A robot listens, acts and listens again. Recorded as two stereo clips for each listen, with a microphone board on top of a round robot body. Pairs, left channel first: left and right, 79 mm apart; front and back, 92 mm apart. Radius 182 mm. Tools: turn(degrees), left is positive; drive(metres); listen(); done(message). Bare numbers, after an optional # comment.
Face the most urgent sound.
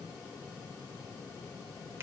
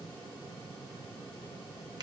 listen()
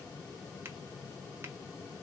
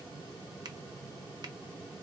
listen()
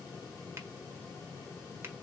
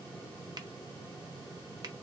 done("I can't make out anything urgent.")